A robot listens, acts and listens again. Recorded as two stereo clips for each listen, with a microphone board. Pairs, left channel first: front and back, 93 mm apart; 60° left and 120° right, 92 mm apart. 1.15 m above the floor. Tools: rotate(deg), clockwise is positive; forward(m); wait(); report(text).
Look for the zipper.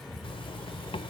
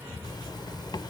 rotate(-20)
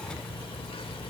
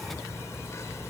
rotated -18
report("Found it: a zipper, straight ahead.")